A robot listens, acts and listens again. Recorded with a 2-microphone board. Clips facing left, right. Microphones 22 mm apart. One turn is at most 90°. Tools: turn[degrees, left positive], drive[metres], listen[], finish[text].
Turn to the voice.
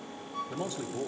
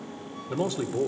Thought: The man speaking: about 60° right or 120° right.
Action: turn[-60]
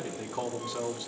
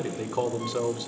Thought: So it is at 40° right.
Action: turn[-40]
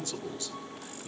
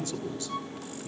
Thought: The man speaking is now 10° left.
Action: turn[10]
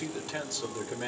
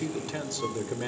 Action: finish[Facing the man speaking.]